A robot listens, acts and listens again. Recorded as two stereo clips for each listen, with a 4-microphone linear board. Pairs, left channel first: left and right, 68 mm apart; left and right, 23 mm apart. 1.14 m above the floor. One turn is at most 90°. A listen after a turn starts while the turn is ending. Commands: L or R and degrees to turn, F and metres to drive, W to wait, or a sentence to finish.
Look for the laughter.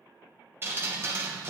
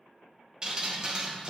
W
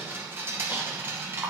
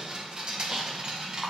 W
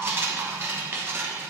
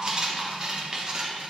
I can't make out laughter, only dripping.